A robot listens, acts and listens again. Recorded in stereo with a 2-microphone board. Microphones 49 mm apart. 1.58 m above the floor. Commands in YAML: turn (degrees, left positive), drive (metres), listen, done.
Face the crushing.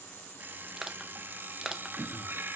turn: -30
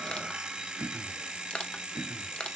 turn: 25
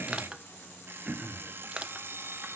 turn: -20
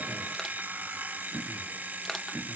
listen: true
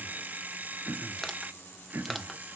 done: "Found it: crushing, straight ahead, under 1 m away."